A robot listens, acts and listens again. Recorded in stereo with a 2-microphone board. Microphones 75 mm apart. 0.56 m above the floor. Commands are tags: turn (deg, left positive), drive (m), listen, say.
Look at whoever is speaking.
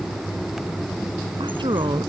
<turn deg="-90"/>
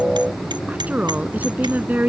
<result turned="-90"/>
<turn deg="-20"/>
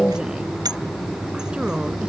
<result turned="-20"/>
<listen/>
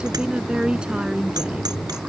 <turn deg="-10"/>
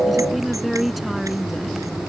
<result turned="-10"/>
<say>Facing the woman speaking.</say>